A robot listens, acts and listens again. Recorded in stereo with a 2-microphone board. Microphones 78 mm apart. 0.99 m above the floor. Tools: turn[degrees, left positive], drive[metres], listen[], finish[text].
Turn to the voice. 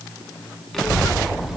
Action: turn[-30]
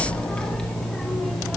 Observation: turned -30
Action: turn[30]
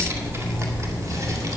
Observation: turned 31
Thought: So it is at 45° right.
Action: turn[-45]
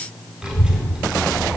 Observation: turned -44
Thought: The child speaking is now 10° right.
Action: turn[-10]
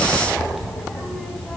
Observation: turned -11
Action: finish[Found it: a child speaking, straight ahead.]